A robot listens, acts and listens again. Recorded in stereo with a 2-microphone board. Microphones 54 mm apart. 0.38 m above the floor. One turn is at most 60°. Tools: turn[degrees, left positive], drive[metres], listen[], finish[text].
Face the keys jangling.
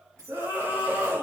Thought: The keys jangling: about 75° right or 105° right.
Action: turn[-60]
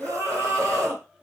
Action: listen[]
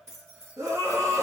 Thought: So it is at 50° right.
Action: turn[-50]
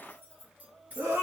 Thought: The keys jangling is now 30° right.
Action: turn[-30]
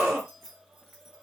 Action: finish[Found it: keys jangling, straight ahead.]